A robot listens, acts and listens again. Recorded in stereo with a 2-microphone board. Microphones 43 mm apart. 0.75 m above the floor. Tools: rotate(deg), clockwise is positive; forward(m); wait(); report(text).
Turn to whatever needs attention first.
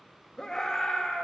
rotate(-15)
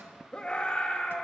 rotate(-150)
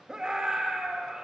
rotate(20)
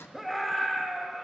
report("Facing the scream, 1 to 2 m away.")